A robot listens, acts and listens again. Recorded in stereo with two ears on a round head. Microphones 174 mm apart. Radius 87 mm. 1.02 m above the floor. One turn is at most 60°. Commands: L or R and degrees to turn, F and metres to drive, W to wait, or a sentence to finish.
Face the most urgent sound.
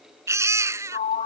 R15
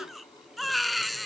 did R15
Found it: a baby crying, straight ahead.